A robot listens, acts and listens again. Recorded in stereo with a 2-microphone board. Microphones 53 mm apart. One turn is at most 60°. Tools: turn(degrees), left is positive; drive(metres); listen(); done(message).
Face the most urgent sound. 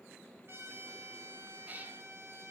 listen()
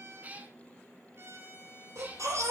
turn(degrees=-60)
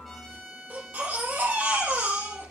turn(degrees=-35)
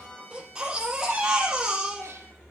turn(degrees=-15)
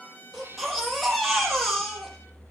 done("Facing the baby crying.")